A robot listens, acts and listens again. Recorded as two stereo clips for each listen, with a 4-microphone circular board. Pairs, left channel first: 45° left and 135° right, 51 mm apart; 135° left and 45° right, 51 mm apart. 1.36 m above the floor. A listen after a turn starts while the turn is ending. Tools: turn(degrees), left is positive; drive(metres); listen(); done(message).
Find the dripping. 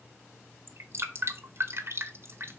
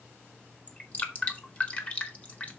turn(degrees=-165)
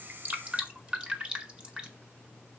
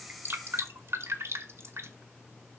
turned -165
turn(degrees=-65)
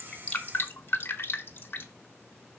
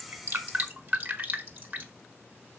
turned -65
done("Facing the dripping.")